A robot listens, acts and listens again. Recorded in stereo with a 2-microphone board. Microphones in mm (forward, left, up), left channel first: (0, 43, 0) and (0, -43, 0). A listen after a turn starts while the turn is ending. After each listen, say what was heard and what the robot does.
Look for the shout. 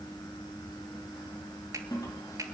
Keep listening.
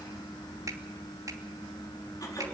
Keep listening.
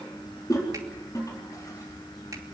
I can't make out a shout, only a toilet flushing.